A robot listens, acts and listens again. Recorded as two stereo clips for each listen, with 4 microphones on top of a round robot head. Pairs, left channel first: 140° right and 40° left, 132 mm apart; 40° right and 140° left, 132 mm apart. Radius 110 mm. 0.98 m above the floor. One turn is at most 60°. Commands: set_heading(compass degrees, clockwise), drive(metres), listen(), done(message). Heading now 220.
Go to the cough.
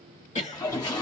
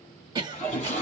set_heading(280)
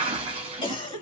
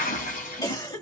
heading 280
set_heading(340)
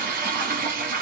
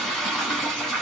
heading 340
set_heading(15)
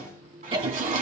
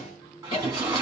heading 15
drive(1.0)
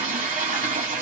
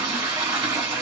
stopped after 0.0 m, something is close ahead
listen()
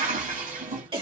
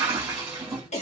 done("Something is in my way. I am facing the cough but have not reached it.")